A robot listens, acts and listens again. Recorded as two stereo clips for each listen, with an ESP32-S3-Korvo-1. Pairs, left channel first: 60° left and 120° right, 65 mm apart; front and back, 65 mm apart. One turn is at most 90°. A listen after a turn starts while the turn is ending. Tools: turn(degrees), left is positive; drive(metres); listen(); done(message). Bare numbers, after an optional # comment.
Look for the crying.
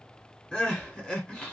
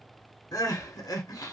# The crying: 15° right.
turn(-15)
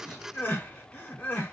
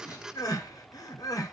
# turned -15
done("Facing the crying, under 1 m away.")